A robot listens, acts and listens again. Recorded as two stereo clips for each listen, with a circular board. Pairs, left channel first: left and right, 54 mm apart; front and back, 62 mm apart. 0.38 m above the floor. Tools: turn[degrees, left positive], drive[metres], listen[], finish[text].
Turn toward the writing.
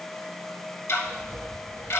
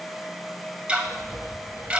Thought: The writing: 150° left.
Action: turn[150]
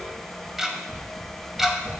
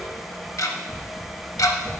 Thought: The writing is now 25° left.
Action: turn[25]
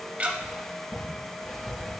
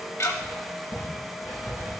Action: finish[Facing the writing.]